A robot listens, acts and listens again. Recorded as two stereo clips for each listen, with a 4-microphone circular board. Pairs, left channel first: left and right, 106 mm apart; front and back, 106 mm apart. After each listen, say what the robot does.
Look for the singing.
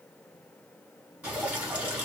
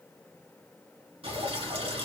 Keep listening.
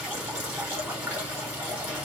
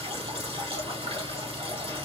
Keep listening.
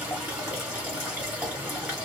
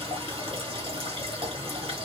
I can't make out singing to turn to.